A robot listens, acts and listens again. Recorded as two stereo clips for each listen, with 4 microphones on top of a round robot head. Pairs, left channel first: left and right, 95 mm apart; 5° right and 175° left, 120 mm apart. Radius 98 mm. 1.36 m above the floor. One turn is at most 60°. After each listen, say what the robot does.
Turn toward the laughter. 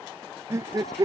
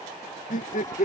Turn 30° right.
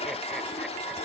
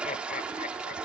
Keep listening.
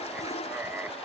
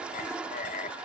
Turn 15° right.
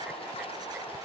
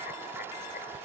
Keep listening.
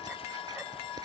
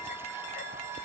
Keep listening.
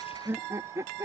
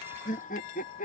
Turn 25° right.
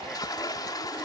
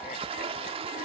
Keep listening.
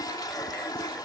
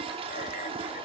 Keep listening.
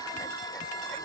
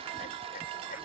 I heard laughter from this way, but can't make it out now.